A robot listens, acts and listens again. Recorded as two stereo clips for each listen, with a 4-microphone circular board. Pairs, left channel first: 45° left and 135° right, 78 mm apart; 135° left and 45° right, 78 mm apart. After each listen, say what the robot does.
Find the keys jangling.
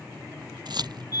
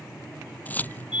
Turn 155° right.
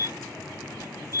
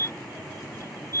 Keep listening.
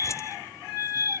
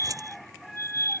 Facing the keys jangling.